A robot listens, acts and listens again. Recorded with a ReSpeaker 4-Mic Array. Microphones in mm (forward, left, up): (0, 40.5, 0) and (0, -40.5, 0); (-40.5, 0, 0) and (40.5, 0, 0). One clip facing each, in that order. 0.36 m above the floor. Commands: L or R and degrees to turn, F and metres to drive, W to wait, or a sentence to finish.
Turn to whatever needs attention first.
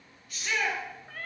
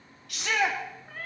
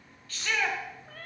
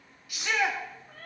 R80
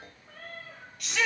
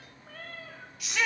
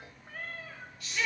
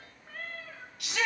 Facing the shout, 2 to 4 m away.